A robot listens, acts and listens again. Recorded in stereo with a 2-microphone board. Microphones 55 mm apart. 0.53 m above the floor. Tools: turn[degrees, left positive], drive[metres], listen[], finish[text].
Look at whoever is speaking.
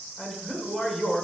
Action: turn[-30]
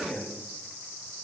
Thought: So it is at 30° left.
Action: turn[30]
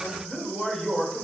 Action: finish[Facing the man speaking.]